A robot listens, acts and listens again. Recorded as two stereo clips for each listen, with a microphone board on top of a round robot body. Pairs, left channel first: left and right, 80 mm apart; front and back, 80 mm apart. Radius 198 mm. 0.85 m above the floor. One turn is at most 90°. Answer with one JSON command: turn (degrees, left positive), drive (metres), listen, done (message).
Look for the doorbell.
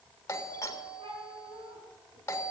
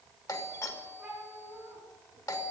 {"turn": 40}
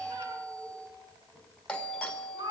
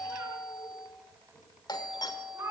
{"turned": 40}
{"turn": 15}
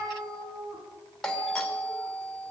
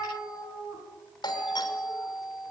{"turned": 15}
{"done": "Facing the doorbell."}